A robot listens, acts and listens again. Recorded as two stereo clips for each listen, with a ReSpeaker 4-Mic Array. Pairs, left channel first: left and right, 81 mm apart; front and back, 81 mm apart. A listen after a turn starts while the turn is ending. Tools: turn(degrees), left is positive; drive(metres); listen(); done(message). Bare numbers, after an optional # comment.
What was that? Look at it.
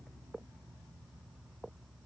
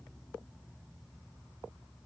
listen()
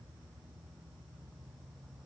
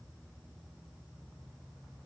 listen()
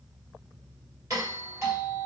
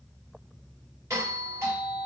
# The doorbell: 135° right.
turn(-135)
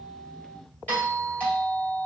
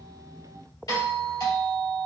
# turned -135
# The doorbell is now 25° left.
turn(25)
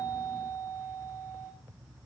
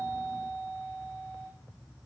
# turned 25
done("Found it: a doorbell, straight ahead, 2 to 4 m away.")